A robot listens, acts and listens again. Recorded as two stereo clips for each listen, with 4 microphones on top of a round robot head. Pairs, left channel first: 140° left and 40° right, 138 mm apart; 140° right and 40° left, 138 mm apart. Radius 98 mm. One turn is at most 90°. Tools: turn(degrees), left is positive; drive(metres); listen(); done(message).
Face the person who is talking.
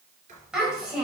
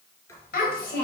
turn(degrees=-90)
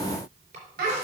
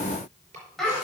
turn(degrees=-55)
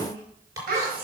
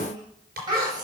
turn(degrees=-25)
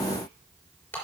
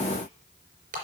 listen()
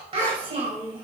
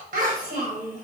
turn(degrees=15)
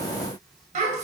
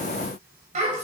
done("Facing the child speaking.")